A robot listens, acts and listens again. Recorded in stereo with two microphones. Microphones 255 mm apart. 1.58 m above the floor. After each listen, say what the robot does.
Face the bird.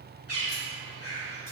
Turn 65° left.
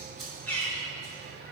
Found it: a bird, straight ahead, 1 to 2 m away.